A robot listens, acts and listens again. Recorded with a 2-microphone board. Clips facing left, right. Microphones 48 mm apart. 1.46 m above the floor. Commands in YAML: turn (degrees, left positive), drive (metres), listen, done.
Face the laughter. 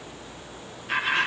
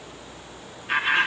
turn: -20
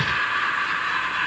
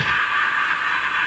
turn: -140
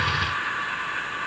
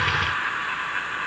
turn: -40
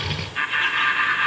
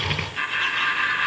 turn: 15
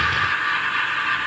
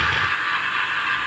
done: "Facing the laughter, 1 to 2 m away."